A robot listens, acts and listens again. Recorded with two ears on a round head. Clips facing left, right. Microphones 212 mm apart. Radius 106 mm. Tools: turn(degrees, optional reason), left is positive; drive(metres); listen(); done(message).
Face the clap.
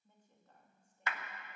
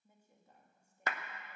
turn(degrees=-35, reason="The clap: about 35° right or 145° right.")
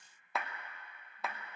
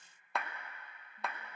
done("Facing the clap, under 1 m away.")